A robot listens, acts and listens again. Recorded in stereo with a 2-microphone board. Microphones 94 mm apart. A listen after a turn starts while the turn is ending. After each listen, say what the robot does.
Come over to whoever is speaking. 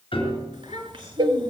Turn 70° right.
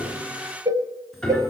Keep listening.
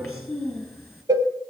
Drive 1.0 m forward.
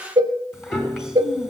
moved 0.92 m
Drive 1.0 m forward.
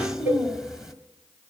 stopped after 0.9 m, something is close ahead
I am next to the child speaking.